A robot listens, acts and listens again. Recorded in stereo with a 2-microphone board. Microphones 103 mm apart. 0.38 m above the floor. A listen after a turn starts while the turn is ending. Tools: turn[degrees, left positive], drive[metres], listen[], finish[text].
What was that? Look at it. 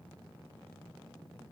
Action: listen[]
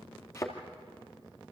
Thought: The thud: about 25° left or 155° left.
Action: turn[25]
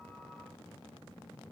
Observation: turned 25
Action: listen[]
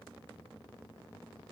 Action: finish[I heard a thud, but can't make it out now. It was about straight ahead or 130° left.]